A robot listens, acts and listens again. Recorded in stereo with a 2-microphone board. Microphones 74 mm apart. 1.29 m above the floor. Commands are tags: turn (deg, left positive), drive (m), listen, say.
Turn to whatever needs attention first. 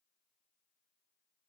<listen/>
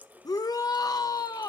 <turn deg="55"/>
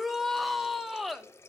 <say>Found it: a shout, straight ahead.</say>